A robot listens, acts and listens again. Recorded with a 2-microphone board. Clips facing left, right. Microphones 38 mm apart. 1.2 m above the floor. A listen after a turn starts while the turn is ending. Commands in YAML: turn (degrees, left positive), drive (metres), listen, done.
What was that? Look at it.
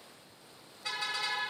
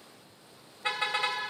turn: -40
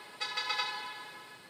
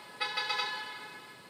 done: "Found it: a car horn, straight ahead."